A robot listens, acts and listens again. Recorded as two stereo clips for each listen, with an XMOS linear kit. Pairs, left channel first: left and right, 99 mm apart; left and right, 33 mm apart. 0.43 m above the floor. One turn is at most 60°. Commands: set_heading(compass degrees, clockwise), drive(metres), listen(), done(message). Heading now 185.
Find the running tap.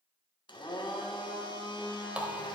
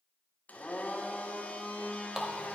set_heading(215)
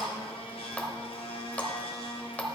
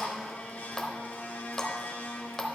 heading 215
set_heading(200)
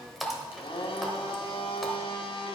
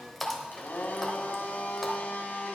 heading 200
done("Found it: a running tap, straight ahead, 1 to 2 m away.")